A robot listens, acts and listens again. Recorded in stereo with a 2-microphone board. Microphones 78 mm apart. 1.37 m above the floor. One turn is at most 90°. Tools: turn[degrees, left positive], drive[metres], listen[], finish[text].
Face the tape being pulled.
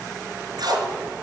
Thought: The tape being pulled: about 65° right or 115° right.
Action: turn[-65]
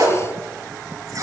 Thought: So it is at 45° right.
Action: turn[-45]
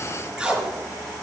Thought: The tape being pulled is now 10° right.
Action: turn[-10]
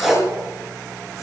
Action: finish[Facing the tape being pulled, over 4 m away.]